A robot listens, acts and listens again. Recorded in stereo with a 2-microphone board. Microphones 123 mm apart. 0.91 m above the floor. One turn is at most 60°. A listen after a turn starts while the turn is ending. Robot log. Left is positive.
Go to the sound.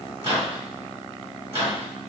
note: The microwave: about 50° right or 130° right.
cmd yaw -50
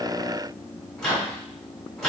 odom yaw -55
cmd fwd 1.0
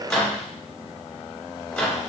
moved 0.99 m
note: The microwave is now 10° left.
cmd yaw +10
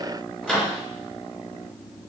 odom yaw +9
cmd fwd 1.0
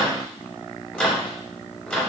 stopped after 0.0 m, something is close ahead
end: I am next to the microwave.